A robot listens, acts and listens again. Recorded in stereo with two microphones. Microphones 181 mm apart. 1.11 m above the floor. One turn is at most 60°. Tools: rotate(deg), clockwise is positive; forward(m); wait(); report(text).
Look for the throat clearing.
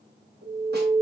wait()
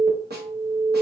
wait()
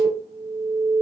report("I can't make out throat clearing to turn to.")